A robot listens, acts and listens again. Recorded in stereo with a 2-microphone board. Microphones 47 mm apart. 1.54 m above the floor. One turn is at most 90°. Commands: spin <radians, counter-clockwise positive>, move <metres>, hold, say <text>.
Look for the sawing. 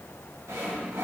spin -1.57
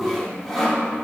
say Found it: sawing, straight ahead, 2 to 4 m away.